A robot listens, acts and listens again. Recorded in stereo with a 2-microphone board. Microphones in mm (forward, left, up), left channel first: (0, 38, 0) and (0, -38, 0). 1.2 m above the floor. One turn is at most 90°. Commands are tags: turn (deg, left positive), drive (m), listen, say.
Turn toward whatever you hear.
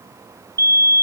<turn deg="-50"/>
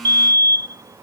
<turn deg="-70"/>
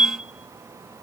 <turn deg="-15"/>
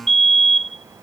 <say>Facing the fire alarm.</say>